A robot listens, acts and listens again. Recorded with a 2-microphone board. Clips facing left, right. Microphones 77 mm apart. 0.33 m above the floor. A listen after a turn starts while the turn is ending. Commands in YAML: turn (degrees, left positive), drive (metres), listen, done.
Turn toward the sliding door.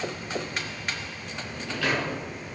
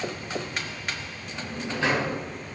turn: -25
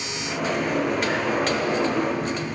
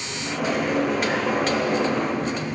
done: "Facing the sliding door, 2 to 4 m away."